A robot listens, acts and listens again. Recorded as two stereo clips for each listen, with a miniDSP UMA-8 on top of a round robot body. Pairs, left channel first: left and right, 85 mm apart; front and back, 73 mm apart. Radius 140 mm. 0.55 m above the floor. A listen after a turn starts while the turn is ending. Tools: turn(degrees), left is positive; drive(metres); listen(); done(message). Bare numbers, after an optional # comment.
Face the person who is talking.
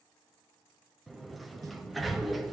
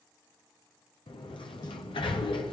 listen()
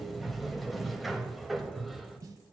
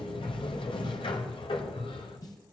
listen()
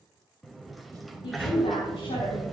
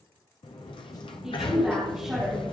# The woman speaking: 95° left.
turn(95)
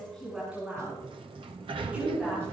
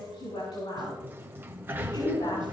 # The woman speaking is now 15° right.
turn(-15)
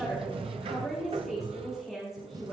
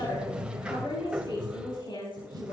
done("Found it: a woman speaking, straight ahead, over 4 m away.")